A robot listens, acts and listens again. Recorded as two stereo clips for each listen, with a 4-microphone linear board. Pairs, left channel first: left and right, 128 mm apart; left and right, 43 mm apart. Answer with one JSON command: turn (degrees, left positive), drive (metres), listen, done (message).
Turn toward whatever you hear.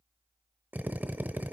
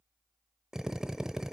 {"turn": -30}
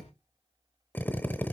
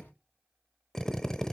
{"turn": 15}
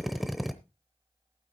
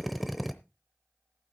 {"done": "Found it: a drill, straight ahead."}